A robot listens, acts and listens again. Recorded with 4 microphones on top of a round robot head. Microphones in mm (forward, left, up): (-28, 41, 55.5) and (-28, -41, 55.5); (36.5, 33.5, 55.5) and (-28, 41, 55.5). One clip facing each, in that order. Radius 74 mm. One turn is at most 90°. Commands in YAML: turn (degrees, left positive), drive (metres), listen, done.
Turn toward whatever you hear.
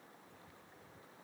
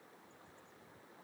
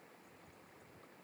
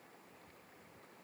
listen: true
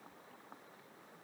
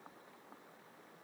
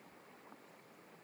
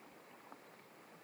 listen: true
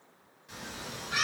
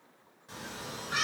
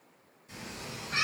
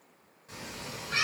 turn: -90
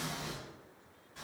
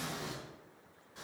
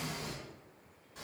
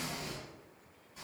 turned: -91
turn: -30
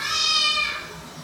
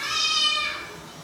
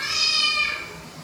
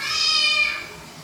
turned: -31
turn: 30
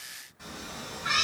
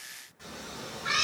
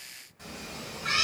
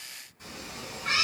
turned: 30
done: "Found it: a cat meowing, straight ahead, 1 to 2 m away."